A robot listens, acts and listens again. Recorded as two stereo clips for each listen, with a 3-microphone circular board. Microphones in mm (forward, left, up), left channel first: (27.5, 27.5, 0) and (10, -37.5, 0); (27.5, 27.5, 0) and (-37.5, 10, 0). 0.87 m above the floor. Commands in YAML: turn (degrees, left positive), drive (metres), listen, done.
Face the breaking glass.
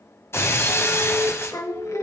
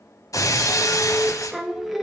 turn: 30
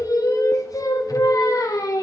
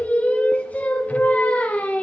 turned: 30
done: "Facing where the breaking glass came from. I can't hear it now."